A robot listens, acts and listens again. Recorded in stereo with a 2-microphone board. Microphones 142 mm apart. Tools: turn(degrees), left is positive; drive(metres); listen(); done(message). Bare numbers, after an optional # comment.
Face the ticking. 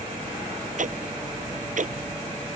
# The ticking: about 65° right or 115° right.
turn(-65)
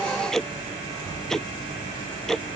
done("Facing the ticking.")